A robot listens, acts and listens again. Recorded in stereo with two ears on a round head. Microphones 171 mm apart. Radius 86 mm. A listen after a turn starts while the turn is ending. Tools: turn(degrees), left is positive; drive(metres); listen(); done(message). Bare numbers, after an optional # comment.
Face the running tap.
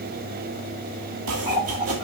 # The running tap: about 25° right or 155° right.
turn(-25)
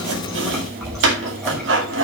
done("Found it: a running tap, straight ahead.")